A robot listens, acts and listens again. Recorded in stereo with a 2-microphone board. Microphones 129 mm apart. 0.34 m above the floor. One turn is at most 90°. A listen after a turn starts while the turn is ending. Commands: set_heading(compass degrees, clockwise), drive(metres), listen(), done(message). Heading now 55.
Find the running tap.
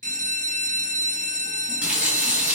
set_heading(85)
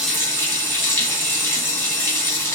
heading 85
set_heading(65)
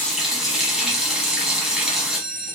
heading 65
done("Facing the running tap.")